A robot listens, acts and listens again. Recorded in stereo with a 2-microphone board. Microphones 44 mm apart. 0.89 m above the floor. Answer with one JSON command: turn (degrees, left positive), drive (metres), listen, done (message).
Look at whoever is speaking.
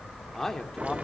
{"turn": 30}
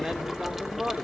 {"turn": -20}
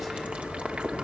{"listen": true}
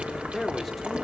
{"done": "Facing the man speaking, 2 to 4 m away."}